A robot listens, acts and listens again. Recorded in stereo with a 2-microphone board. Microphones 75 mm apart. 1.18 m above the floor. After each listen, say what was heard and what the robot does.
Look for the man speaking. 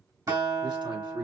Turn 90° right.
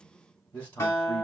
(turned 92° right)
So it is at 20° left. Turn 20° left.
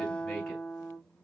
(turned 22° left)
Keep listening.
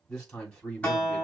The man speaking is now 10° left. Turn 10° left.
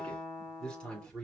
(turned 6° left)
The man speaking is now 10° left. Turn 10° left.
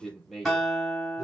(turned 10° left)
Facing the man speaking, 2 to 4 m away.